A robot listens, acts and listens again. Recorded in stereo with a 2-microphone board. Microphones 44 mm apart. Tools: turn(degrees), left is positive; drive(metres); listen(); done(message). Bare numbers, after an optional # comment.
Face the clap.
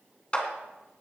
# The clap: about 25° left or 155° left.
turn(25)
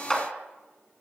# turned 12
# So it is at 15° left.
turn(15)
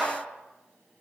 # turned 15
listen()
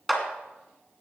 done("Facing the clap.")